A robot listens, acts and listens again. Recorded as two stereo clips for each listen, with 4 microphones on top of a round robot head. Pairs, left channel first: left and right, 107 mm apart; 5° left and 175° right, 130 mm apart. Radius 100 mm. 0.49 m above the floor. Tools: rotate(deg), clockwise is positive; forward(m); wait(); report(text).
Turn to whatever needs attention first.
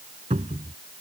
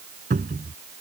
wait()
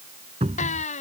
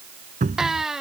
rotate(-95)
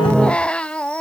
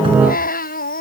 rotate(-10)
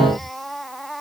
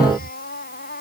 report("Found it: a baby crying, straight ahead.")